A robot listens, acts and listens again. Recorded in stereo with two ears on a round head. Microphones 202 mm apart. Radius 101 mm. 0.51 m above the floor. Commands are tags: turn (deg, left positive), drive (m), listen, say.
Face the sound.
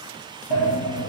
<turn deg="75"/>
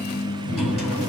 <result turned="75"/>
<say>Facing the sliding door.</say>